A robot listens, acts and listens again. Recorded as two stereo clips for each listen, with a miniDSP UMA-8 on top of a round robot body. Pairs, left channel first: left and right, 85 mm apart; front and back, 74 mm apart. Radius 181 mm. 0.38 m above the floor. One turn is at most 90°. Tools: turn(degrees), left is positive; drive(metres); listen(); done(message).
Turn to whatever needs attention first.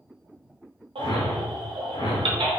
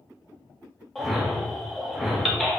turn(degrees=-90)
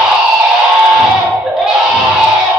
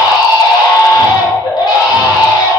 done("Facing the baby crying, 1 to 2 m away.")